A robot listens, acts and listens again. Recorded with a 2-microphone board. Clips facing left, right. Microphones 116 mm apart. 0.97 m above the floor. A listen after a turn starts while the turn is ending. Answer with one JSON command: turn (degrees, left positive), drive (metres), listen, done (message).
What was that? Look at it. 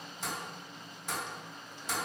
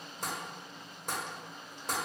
{"turn": -45}
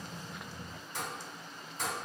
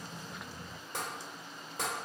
{"turn": -90}
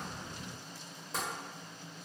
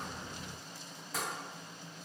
{"turn": 25}
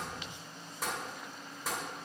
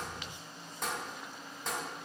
{"done": "Found it: tapping, straight ahead."}